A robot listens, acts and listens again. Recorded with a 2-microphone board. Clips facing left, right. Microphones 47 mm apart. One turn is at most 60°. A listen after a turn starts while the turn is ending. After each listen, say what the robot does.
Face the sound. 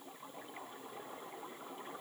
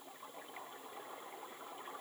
Keep listening.
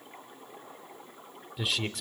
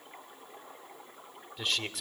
Turn 30° left.
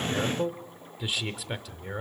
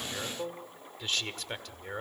Turn 30° left.
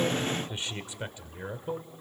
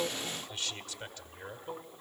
Turn 60° left.
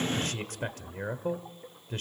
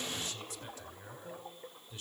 Turn 60° left.
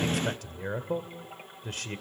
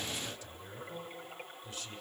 Turn 60° left.
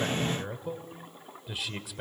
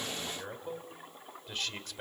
Found it: a man speaking, straight ahead.